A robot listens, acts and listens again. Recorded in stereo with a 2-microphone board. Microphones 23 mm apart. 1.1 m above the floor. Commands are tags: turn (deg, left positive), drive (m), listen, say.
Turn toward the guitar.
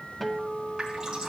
<turn deg="30"/>
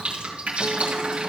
<listen/>
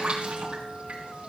<listen/>
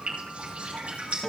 <turn deg="150"/>
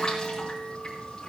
<listen/>
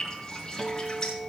<say>Facing the guitar.</say>